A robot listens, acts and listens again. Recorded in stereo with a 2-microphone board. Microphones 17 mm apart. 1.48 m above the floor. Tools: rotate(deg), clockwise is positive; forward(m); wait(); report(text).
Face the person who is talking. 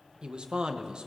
rotate(55)
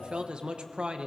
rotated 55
rotate(65)
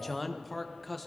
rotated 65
report("Facing the man speaking.")